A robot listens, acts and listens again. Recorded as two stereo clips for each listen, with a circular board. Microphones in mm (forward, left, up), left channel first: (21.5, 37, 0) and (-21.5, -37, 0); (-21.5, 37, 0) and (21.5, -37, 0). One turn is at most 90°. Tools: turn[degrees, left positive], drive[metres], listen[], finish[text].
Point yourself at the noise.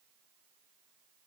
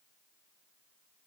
Action: listen[]
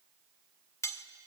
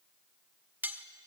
Thought: The cutlery clinking: 10° left.
Action: turn[10]
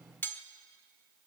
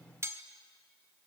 Action: finish[Found it: cutlery clinking, straight ahead.]